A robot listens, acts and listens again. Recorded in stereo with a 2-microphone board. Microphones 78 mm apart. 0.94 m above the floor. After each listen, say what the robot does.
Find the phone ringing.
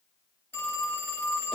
Turn 30° left.
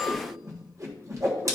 Keep listening.
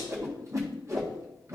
Keep listening.
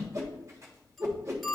Found it: a phone ringing, straight ahead.